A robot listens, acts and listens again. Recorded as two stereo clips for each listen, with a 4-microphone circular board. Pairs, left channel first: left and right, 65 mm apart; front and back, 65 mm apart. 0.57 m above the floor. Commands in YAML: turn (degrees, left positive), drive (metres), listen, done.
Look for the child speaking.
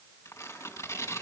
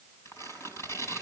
listen: true
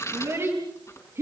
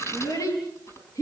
turn: -40
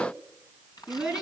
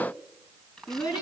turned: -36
turn: -15
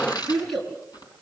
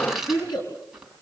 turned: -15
done: "Facing the child speaking, over 4 m away."